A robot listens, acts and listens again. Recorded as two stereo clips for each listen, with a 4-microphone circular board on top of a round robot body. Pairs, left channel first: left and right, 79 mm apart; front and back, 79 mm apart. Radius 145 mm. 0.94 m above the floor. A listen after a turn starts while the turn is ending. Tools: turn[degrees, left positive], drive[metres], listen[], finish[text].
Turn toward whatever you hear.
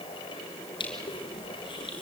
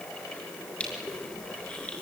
Thought: The crushing: 75° left.
Action: turn[75]
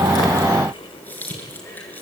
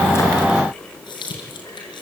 Thought: The crushing is now 20° left.
Action: turn[20]
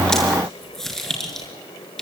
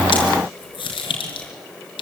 Action: finish[Facing the crushing, over 4 m away.]